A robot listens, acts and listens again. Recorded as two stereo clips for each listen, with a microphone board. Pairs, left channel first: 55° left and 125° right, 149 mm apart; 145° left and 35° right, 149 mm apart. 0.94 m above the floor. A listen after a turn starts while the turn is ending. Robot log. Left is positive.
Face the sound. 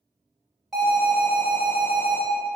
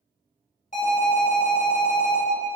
note: The alarm: 145° left.
cmd yaw +145
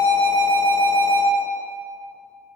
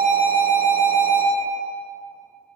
note: The alarm is now 50° right.
cmd yaw -50
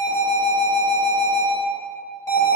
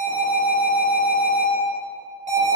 note: The alarm is now 10° right.
cmd yaw -10
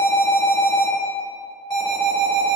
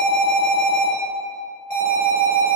end: Found it: an alarm, straight ahead.